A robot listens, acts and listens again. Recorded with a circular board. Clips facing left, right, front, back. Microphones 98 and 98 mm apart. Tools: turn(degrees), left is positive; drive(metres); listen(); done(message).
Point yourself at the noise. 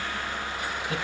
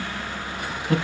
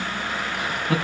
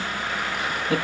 turn(degrees=-45)
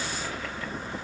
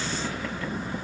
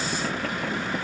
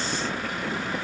listen()
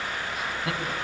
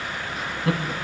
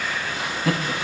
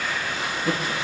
done("Facing the laughter, over 4 m away.")